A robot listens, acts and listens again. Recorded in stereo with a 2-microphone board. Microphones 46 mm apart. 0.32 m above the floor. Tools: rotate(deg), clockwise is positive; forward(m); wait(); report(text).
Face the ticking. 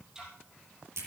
rotate(30)
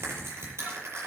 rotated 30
wait()
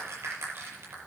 wait()
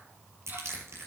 report("I heard ticking, but can't make it out now. It was about 15° left or 135° right.")